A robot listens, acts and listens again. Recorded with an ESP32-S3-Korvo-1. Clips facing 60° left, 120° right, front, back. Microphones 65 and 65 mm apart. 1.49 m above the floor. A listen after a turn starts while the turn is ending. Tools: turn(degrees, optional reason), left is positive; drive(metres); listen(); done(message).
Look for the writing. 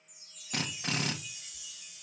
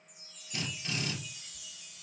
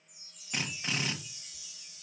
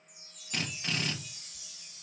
done("Found it: writing, straight ahead.")